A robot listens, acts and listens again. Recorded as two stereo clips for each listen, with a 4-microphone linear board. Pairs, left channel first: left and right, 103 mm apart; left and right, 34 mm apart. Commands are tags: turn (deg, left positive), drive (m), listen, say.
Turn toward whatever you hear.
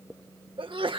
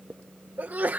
<turn deg="-55"/>
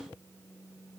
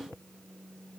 <listen/>
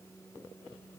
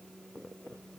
<say>I heard a sneeze, but can't make it out now. It was about straight ahead or 70° right.</say>